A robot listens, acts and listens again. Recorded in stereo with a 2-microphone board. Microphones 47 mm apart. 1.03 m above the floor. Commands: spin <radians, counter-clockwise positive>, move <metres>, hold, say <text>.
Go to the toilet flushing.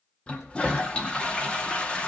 spin 0.35
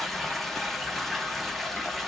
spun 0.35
move 1.0
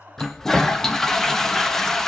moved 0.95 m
spin 0.17
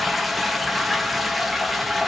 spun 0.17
move 1.0
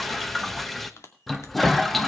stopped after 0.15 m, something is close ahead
say Arrived at the toilet flushing, straight ahead.